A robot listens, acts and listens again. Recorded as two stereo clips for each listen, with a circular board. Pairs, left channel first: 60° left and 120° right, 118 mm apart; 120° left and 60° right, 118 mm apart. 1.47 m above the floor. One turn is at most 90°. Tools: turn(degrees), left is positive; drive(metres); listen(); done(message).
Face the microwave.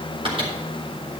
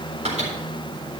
turn(degrees=-80)
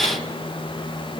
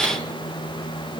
turn(degrees=10)
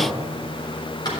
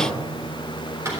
listen()
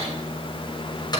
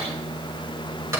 done("Found it: a microwave, straight ahead, 2 to 4 m away.")